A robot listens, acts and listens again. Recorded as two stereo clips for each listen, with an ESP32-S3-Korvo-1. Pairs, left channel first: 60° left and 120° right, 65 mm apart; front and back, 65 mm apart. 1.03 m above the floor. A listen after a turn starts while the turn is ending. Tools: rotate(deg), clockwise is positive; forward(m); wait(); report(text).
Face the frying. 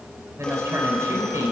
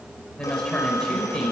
wait()
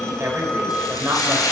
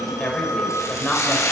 rotate(-40)
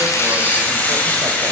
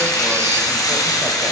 report("Found it: frying, straight ahead.")